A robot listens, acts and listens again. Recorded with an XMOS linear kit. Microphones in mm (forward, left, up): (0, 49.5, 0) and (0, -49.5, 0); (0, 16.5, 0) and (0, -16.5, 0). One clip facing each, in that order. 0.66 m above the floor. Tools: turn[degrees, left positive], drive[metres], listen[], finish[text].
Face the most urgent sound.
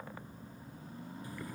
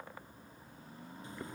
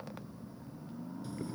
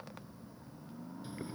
Action: listen[]
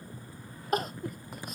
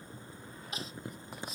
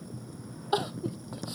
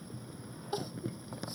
Thought: The crying: about 55° left or 125° left.
Action: turn[55]
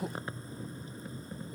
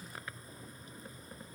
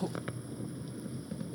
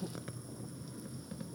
Thought: So it is at 70° left.
Action: turn[70]
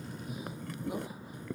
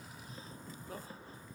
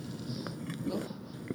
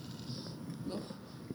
Action: listen[]
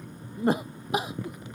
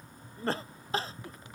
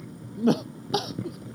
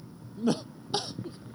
Thought: The crying is now 15° left.
Action: turn[15]
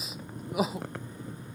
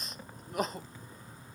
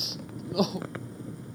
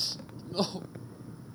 Action: finish[Facing the crying.]